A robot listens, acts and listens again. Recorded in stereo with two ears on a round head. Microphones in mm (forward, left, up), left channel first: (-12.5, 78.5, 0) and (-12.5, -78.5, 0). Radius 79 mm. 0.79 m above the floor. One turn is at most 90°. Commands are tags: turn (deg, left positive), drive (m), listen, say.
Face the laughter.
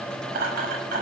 <turn deg="-55"/>
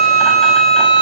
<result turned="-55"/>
<listen/>
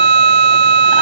<listen/>
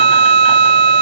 <say>I heard laughter, but can't make it out now. It was about straight ahead or 70° right.</say>